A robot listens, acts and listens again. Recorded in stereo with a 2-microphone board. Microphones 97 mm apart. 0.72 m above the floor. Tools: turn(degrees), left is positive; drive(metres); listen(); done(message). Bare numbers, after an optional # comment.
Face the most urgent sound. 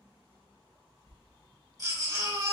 # The baby crying: about 40° right or 140° right.
turn(-40)
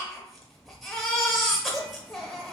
done("Found it: a baby crying, straight ahead.")